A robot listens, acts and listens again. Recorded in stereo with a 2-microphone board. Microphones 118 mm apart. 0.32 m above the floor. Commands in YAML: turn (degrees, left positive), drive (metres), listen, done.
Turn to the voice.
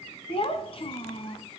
turn: 50
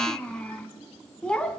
turn: 10
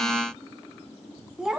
done: "Found it: a child speaking, straight ahead, 2 to 4 m away."